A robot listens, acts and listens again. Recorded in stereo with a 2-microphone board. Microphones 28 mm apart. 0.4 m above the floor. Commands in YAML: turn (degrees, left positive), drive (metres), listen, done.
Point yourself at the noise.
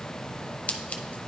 turn: 50
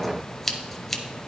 turn: 10
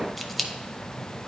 done: "Facing the scissors, under 1 m away."